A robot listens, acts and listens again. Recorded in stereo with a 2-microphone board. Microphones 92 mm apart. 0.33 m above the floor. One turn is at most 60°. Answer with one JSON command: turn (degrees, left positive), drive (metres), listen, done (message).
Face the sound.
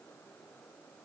{"listen": true}
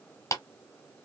{"turn": 35}
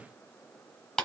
{"turn": 10}
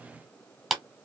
{"done": "Facing the clap, 1 to 2 m away."}